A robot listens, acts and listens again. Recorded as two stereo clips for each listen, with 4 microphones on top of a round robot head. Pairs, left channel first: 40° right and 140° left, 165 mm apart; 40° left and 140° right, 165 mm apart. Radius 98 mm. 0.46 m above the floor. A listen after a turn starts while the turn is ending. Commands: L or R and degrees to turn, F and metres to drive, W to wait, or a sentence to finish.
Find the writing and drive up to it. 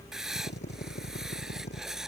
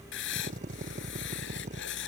L50
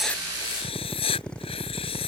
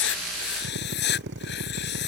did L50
L20
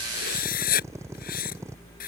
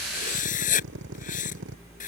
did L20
F1.0
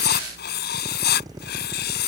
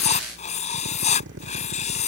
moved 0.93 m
R10
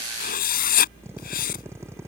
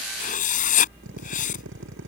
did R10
F1.0
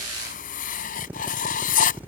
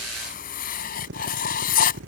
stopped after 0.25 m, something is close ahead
Arrived at the writing, straight ahead.